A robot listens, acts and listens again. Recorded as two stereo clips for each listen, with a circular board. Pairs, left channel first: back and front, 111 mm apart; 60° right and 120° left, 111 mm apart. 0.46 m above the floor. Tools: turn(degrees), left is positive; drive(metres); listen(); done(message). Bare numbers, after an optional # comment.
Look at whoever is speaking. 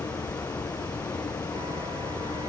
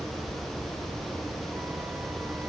listen()
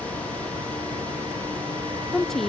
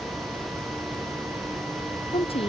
# The woman speaking: 95° right.
turn(-95)
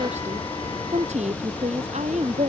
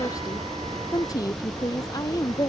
done("Found it: a woman speaking, straight ahead.")